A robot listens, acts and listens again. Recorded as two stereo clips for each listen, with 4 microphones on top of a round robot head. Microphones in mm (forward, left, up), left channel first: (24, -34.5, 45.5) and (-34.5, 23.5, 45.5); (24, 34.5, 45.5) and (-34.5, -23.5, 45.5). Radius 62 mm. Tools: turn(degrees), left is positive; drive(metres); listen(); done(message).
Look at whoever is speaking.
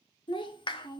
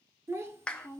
turn(degrees=-75)
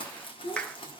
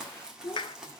turn(degrees=-10)
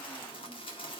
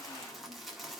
listen()
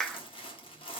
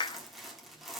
listen()
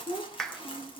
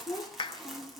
done("Facing the child speaking, 1 to 2 m away.")